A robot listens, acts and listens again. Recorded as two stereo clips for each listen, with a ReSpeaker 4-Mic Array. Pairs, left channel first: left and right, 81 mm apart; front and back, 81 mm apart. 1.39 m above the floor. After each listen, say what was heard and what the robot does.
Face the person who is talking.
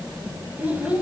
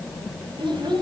The child speaking: 160° right. Turn 160° right.
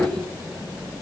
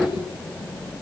Keep listening.
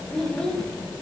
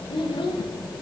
The child speaking is now 10° left. Turn 10° left.
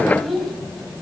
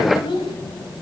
Found it: a child speaking, straight ahead.